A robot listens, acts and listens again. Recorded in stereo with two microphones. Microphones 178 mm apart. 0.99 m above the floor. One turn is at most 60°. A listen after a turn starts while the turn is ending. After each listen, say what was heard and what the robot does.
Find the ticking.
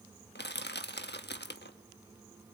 Keep listening.
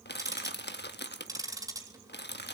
The ticking: about 20° right or 160° right. Turn 20° right.
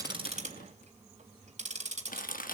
So it is at 140° right. Turn 60° right.
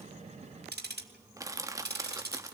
The ticking is now 70° right. Turn 60° right.
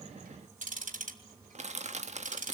The ticking is now 45° right. Turn 45° right.
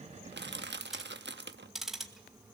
Found it: ticking, straight ahead.